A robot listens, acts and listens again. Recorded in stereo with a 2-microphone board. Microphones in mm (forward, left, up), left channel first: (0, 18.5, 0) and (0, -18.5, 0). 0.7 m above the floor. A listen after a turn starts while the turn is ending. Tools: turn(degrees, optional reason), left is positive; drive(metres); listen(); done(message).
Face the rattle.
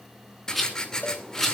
turn(degrees=30)
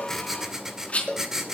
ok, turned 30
turn(degrees=145, reason="So it is at 145° left.")
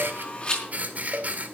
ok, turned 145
turn(degrees=30, reason="The rattle is now 30° left.")
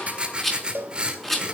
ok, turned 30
turn(degrees=10, reason="The rattle is now 10° left.")
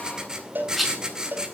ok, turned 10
done("Found it: a rattle, straight ahead, over 4 m away.")